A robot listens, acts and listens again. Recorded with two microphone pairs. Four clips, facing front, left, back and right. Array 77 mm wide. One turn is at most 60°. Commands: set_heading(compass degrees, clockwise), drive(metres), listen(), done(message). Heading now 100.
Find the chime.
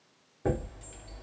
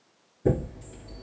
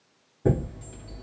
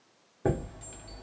set_heading(160)
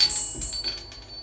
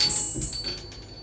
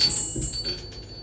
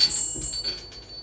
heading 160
set_heading(150)
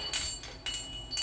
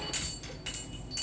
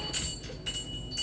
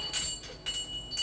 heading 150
done("Found it: a chime, straight ahead.")